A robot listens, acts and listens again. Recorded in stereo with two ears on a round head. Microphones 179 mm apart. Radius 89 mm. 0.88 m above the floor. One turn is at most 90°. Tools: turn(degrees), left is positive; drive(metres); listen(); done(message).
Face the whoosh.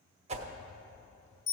turn(degrees=-35)
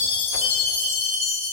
listen()
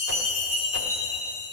listen()
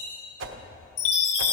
turn(degrees=-90)
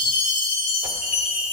turn(degrees=-15)
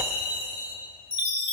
listen()
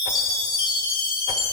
done("Facing where the whoosh came from. I can't hear it now.")